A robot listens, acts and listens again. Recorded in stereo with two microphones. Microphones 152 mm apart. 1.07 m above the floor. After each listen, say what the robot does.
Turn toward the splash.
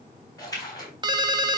Turn 25° left.
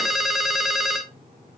Keep listening.
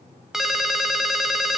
I heard a splash, but can't make it out now. It was about straight ahead or 130° left.